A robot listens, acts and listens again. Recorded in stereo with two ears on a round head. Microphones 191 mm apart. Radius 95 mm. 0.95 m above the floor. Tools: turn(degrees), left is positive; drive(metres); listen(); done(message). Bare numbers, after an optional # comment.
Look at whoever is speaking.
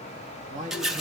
# The man speaking: about 35° right or 145° right.
turn(-35)
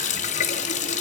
listen()
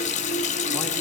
listen()
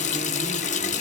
done("I heard a man speaking, but can't make it out now. It was about straight ahead or 110° right.")